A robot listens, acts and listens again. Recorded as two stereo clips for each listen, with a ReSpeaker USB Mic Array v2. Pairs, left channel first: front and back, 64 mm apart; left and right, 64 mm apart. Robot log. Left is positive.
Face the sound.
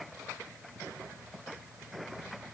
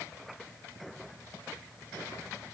cmd idle
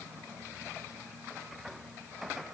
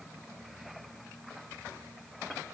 cmd idle
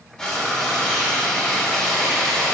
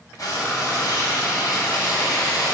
note: The frying: 75° left.
cmd yaw +75
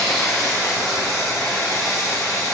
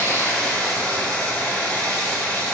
note: The frying is now 20° left.
cmd yaw +20
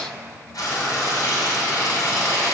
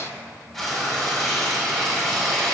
end: Found it: frying, straight ahead, 2 to 4 m away.